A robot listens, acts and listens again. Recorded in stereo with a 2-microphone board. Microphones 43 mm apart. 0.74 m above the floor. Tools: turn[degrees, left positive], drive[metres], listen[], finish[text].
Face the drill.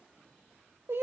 Action: listen[]
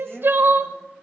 Action: listen[]
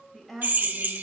Thought: The drill: about 45° right or 135° right.
Action: turn[-45]
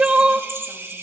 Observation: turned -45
Thought: So it is at 85° right.
Action: turn[-85]
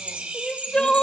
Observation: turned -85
Thought: The drill is now 30° right.
Action: turn[-30]
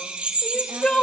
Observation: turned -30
Thought: The drill is now 30° right.
Action: turn[-30]
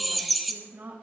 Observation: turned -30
Action: finish[Facing the drill.]